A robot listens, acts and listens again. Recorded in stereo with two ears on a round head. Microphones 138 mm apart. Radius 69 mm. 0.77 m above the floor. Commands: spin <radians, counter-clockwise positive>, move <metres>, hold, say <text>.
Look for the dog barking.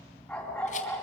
spin 0.52
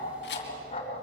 spin 2.44
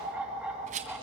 say Facing the dog barking, 2 to 4 m away.